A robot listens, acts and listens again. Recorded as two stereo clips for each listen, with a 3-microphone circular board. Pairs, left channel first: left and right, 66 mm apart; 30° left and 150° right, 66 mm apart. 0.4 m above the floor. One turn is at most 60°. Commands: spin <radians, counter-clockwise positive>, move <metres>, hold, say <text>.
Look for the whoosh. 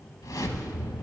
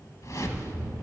spin 1.05
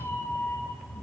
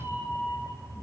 hold
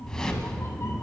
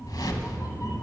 spin 0.26
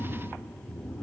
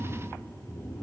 hold
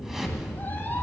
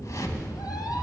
say Found it: a whoosh, straight ahead, under 1 m away.